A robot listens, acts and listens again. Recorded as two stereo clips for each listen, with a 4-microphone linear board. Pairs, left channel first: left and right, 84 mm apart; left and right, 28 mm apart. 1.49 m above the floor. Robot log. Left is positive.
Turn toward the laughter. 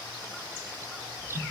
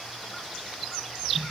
cmd idle
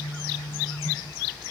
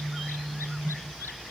cmd idle
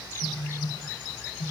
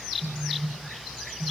end: I can't make out laughter to turn to.